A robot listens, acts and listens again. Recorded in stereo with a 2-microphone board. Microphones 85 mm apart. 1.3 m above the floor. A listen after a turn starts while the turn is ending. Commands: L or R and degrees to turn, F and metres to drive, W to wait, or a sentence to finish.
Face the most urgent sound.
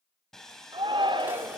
R90
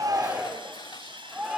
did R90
R10
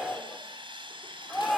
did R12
Facing the shout, over 4 m away.